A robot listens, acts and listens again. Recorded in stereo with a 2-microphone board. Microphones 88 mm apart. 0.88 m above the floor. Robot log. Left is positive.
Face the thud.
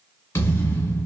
note: The thud: about 25° left or 155° left.
cmd yaw +25
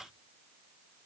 cmd idle
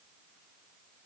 end: I heard a thud, but can't make it out now. It was about straight ahead or 130° left.